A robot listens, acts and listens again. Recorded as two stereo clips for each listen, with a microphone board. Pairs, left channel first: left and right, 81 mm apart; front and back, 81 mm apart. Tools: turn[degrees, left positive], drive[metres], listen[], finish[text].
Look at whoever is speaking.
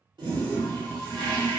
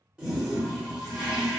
Action: listen[]
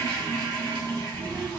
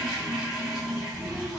Thought: The child speaking: 65° right.
Action: turn[-65]
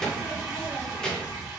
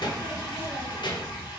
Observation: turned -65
Thought: The child speaking is now 10° left.
Action: turn[10]
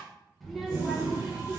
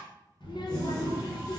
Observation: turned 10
Action: finish[Found it: a child speaking, straight ahead, under 1 m away.]